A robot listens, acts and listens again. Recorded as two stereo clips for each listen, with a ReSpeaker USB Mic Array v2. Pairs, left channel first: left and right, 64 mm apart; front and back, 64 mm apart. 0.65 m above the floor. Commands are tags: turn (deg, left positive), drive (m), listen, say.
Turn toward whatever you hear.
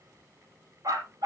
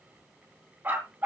<turn deg="-115"/>
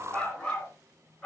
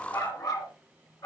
<turn deg="15"/>
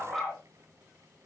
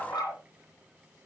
<say>Facing the dog barking.</say>